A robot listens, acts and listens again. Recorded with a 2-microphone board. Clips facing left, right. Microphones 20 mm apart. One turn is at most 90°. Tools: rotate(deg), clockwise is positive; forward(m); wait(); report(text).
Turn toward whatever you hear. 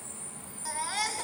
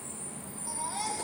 rotate(-70)
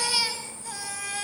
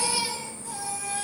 rotate(-35)
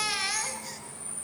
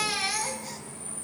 rotate(-10)
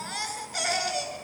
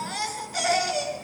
report("Facing the baby crying.")